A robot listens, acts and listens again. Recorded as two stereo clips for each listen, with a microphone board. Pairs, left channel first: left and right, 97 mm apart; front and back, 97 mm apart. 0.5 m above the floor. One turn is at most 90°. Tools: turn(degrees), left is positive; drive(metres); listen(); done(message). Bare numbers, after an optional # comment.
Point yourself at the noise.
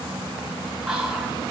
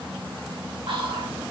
# The whispering: 175° right.
turn(-90)
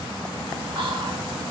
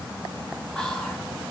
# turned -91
# The whispering is now 80° right.
turn(-80)
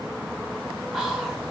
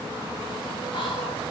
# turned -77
done("Found it: whispering, straight ahead, 1 to 2 m away.")